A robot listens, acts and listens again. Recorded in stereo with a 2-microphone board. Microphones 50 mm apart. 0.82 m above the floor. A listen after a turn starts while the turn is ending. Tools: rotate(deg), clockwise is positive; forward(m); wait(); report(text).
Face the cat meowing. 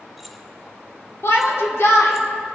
wait()
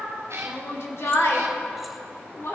rotate(90)
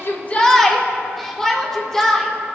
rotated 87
wait()
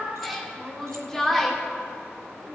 report("Facing the cat meowing.")